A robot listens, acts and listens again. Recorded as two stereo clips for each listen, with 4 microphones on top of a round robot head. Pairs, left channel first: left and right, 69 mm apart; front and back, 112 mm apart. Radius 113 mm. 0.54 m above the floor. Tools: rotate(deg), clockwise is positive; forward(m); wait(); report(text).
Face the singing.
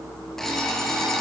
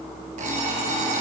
wait()
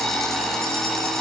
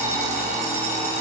wait()
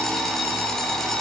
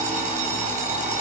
report("I can't make out singing, only an alarm clock.")